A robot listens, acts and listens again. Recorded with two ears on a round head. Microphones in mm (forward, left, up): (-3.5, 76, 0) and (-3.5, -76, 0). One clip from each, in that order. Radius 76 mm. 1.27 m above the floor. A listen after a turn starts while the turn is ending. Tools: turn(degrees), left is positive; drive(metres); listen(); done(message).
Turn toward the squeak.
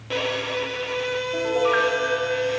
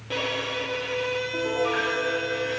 listen()
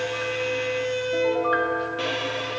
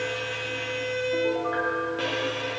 listen()
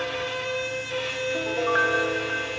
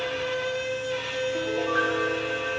done("I can't make out a squeak, only a piano and a violin.")